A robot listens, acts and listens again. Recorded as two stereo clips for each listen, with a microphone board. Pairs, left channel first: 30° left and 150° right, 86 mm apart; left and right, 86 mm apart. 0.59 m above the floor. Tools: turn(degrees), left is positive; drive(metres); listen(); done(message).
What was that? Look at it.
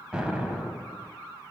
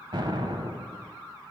turn(degrees=-70)
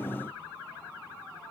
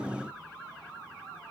done("I heard an explosion from this way, but can't make it out now.")